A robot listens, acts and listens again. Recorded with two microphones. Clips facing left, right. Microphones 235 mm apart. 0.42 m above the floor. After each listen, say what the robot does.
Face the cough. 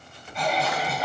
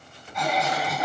Turn 35° left.
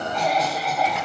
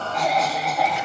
Facing the cough.